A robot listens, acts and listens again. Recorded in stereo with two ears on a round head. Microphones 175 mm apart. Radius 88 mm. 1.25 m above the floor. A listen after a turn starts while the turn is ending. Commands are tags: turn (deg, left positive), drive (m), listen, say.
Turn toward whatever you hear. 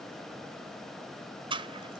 <turn deg="-30"/>
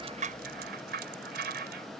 <turn deg="-125"/>
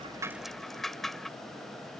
<say>Found it: a rattle, straight ahead.</say>